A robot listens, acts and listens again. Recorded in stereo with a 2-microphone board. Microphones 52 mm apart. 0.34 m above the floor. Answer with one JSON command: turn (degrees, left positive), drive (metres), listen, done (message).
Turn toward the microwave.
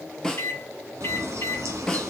{"turn": 55}
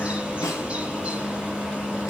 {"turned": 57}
{"listen": true}
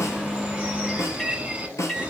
{"done": "Found it: a microwave, straight ahead, 2 to 4 m away."}